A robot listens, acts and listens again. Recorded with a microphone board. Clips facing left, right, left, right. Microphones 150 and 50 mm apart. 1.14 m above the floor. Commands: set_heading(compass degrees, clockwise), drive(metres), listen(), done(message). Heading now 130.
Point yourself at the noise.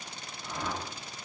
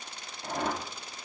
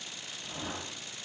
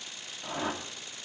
set_heading(190)
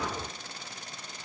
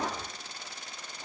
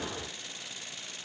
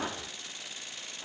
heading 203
set_heading(248)
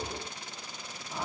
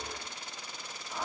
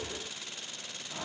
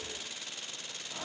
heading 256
done("Found it: a whoosh, straight ahead, 1 to 2 m away.")